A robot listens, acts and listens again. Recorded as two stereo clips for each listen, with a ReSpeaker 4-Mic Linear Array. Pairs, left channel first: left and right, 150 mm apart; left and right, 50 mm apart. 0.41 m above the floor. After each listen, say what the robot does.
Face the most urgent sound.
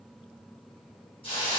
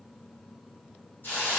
Keep listening.
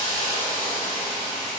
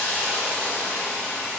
Keep listening.
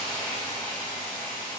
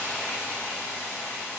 I can't make out anything urgent, only a hiss.